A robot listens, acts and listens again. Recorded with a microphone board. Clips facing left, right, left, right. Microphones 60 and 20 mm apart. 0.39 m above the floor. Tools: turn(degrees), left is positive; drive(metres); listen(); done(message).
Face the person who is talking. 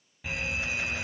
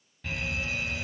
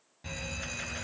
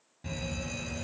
listen()
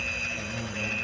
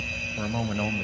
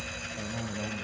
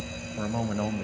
turn(degrees=-60)
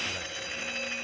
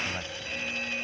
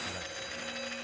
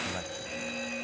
listen()
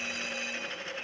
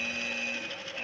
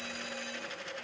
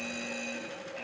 listen()
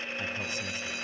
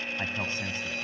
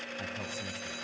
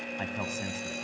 turn(degrees=-40)
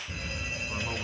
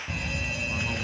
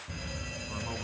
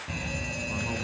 listen()
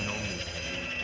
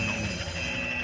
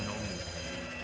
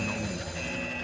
listen()
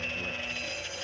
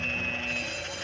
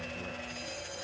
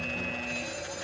done("I heard a man speaking from this way, but can't make it out now.")